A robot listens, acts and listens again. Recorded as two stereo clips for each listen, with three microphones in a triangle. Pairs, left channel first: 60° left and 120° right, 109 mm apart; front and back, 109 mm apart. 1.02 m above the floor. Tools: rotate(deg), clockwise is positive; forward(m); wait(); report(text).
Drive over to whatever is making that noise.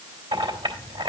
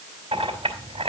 rotate(150)
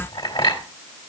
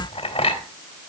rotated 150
rotate(-30)
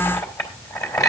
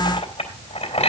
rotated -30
forward(1.0)
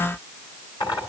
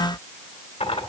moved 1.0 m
rotate(-10)
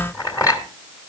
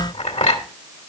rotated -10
forward(1.0)
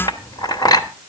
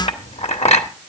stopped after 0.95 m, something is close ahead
report("I am next to the clink.")